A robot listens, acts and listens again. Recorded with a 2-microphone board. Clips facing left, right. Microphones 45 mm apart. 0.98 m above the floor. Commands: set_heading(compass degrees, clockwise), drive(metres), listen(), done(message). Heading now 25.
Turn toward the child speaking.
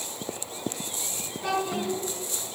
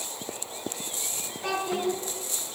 set_heading(55)
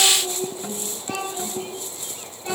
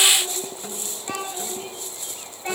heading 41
set_heading(71)
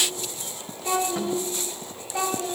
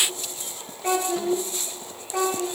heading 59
set_heading(189)
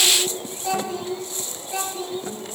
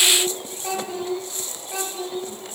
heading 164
set_heading(189)
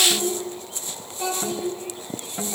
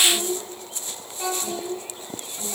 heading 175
set_heading(185)
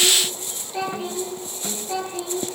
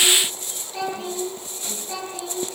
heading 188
done("Found it: a child speaking, straight ahead, over 4 m away.")